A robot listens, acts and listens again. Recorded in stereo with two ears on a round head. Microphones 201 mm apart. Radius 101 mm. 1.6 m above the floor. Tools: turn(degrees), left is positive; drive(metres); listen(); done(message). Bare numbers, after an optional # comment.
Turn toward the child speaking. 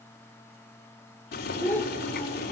turn(30)
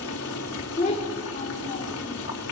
# So it is at 150° left.
turn(150)
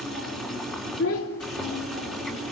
# The child speaking is now 65° left.
turn(65)
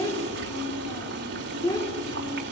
# The child speaking is now 15° left.
turn(15)
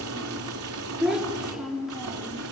done("Found it: a child speaking, straight ahead.")